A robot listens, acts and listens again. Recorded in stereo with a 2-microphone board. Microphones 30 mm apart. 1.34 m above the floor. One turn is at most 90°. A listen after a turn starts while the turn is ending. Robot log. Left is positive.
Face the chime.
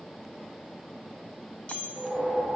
note: The chime: about 50° left or 130° left.
cmd yaw +50
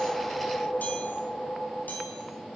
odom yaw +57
cmd idle
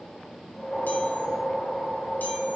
cmd idle
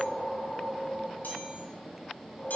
end: I heard a chime, but can't make it out now. It was about 10° right or 75° left.